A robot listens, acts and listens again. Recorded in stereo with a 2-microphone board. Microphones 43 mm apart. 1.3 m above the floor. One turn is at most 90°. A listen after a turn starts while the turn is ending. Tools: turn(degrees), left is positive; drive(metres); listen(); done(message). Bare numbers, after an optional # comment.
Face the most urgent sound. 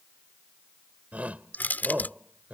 # The shout: about 35° right or 145° right.
turn(-35)
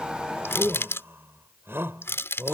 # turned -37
# So it is at 110° right.
turn(-90)
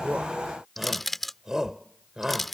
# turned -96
# The shout is now 15° right.
turn(-15)
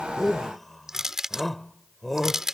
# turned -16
done("Facing the shout.")